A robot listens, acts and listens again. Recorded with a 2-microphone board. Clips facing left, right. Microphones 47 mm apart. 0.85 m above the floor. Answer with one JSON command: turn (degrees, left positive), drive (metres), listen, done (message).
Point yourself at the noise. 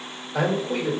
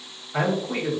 {"turn": -50}
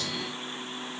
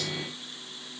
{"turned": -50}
{"listen": true}
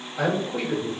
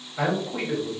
{"turn": -10}
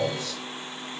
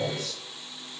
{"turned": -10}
{"done": "Facing the man speaking."}